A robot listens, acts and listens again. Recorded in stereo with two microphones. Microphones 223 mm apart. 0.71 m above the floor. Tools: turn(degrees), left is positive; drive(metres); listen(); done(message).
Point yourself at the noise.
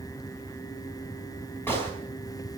turn(degrees=30)
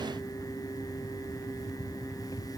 listen()
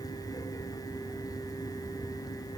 done("I heard a gunshot, but can't make it out now. It was about 20° right or 140° left.")